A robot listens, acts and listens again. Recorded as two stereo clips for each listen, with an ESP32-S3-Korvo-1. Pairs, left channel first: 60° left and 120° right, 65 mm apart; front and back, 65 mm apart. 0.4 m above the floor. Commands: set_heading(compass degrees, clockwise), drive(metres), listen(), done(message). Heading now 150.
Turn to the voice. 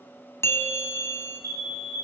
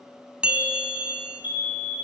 listen()
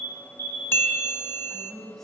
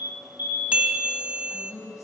set_heading(175)
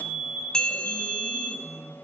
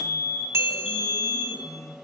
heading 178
done("Facing the woman speaking.")